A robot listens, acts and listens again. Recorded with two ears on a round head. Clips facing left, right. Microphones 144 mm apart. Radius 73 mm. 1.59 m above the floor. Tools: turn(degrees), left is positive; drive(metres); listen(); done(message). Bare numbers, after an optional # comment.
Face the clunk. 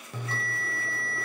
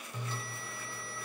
listen()
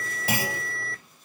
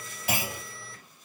# The clunk: about 65° left or 115° left.
turn(65)
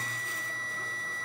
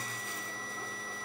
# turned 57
listen()
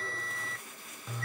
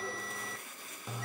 done("I heard a clunk, but can't make it out now. It was about 5° left or 60° left.")